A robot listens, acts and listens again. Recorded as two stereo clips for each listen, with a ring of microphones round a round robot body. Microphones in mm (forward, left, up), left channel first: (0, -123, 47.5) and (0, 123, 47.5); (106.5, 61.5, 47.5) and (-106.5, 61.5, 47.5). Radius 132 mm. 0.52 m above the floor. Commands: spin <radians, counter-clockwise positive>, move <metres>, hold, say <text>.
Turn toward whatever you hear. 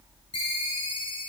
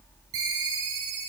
spin -2.79
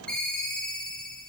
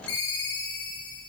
say Facing the ringtone.